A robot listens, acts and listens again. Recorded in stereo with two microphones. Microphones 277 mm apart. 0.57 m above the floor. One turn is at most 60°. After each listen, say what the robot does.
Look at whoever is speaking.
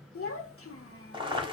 Turn 55° left.
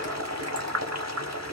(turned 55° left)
Keep listening.
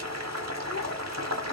Keep listening.
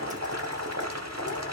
I heard a child speaking, but can't make it out now. It was about straight ahead or 70° left.